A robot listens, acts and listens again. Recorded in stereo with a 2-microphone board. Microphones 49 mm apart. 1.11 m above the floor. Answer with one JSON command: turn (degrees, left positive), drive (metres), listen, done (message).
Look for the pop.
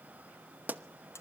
{"turn": -35}
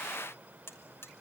{"listen": true}
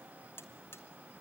{"done": "I heard a pop, but can't make it out now. It was about straight ahead or 110° right."}